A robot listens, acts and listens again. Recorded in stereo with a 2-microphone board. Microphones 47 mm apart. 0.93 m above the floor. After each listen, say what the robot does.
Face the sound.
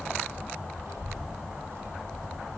Turn 90° right.
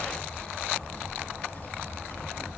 Turn 40° left.
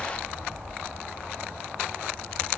Turn 10° left.
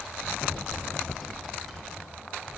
Facing the child speaking.